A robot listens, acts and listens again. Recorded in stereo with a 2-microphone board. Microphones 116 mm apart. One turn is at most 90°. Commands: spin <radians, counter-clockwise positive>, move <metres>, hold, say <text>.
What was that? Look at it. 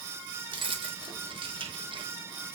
spin -0.79
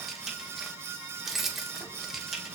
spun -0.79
say Found it: keys jangling, straight ahead.